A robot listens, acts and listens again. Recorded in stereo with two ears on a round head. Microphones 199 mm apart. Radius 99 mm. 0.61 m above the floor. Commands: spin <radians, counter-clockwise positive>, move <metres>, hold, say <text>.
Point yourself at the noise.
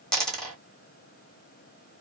spin 0.52
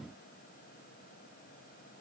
hold
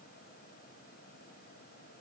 say I heard a dropped coin, but can't make it out now. It was about 25° right or 145° left.